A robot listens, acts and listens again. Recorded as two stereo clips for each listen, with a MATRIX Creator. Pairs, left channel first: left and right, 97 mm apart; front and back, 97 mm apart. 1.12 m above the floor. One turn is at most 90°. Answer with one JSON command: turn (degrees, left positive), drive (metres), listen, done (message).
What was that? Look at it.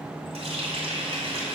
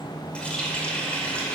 {"turn": -80}
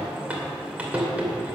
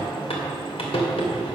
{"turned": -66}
{"turn": -15}
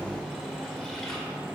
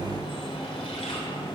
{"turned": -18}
{"listen": true}
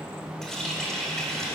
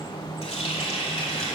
{"done": "Found it: a running tap, straight ahead."}